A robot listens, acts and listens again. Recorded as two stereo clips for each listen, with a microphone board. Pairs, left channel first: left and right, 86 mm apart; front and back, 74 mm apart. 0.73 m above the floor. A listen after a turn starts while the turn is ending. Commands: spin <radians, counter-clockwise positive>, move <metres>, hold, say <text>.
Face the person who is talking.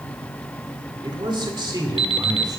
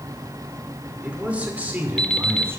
spin -2.09
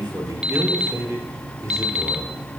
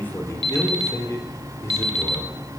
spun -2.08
spin -0.79
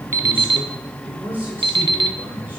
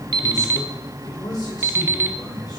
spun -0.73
spin -0.44
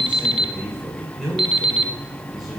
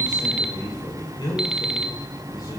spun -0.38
say Found it: a man speaking, straight ahead, 2 to 4 m away.